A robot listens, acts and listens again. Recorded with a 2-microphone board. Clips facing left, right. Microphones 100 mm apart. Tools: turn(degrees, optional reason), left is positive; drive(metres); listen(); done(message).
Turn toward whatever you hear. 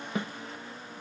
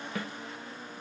turn(degrees=20, reason="The snare drum: about 20° left or 160° left.")
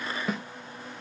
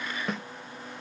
done("Found it: a snare drum, straight ahead, under 1 m away.")